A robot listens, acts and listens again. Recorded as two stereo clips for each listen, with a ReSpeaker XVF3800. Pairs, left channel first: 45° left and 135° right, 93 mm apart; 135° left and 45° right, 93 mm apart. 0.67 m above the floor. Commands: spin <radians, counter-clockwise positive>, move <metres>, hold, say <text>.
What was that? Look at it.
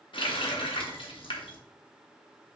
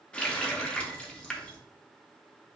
spin 0.96
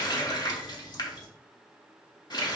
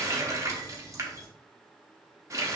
spin 0.17
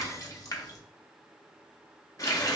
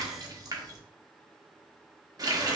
say Found it: a running tap, straight ahead.